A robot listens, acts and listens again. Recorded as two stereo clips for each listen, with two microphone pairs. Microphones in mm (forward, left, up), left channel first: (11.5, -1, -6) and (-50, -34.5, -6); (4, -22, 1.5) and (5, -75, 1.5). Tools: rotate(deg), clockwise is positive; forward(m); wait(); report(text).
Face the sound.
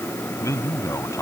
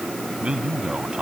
rotate(15)
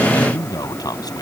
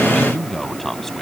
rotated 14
report("Facing the man speaking.")